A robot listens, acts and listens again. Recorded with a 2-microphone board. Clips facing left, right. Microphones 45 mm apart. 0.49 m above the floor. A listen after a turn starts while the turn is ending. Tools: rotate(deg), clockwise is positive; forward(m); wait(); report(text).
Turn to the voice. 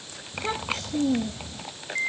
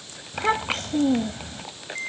rotate(45)
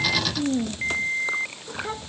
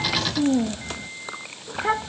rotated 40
rotate(90)
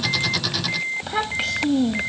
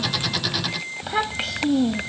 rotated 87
report("Found it: a child speaking, straight ahead.")